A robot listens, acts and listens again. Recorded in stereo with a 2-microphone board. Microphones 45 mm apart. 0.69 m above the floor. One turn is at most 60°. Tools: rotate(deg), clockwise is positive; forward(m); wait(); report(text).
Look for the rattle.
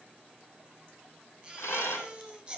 rotate(-60)
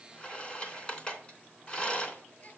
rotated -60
rotate(-30)
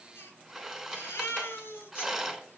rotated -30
report("Facing the rattle.")